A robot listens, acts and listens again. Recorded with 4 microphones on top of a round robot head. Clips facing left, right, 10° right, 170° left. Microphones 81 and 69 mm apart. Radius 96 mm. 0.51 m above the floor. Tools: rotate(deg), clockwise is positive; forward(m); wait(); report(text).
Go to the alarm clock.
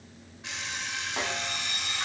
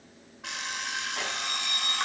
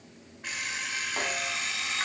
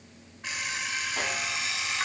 rotate(105)
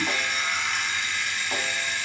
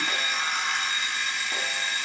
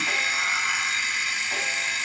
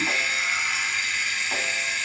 rotate(45)
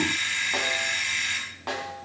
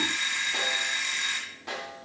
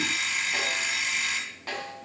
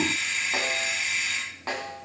rotate(25)
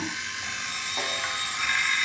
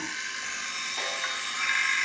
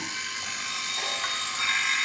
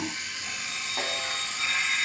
forward(1.0)
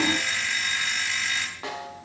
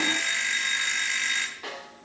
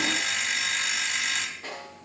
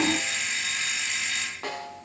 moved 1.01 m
forward(1.0)
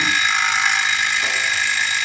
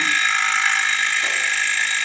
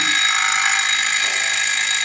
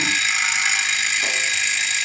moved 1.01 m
rotate(-15)
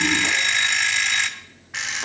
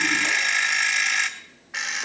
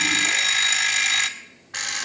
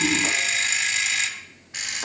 forward(1.0)
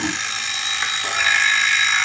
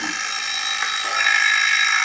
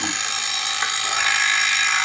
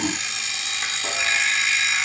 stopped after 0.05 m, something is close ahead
report("I am next to the alarm clock.")